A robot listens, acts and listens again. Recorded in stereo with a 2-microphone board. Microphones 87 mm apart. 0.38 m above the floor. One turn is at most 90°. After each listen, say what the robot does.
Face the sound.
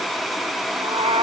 Turn 70° right.
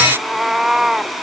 Found it: a cat meowing, straight ahead.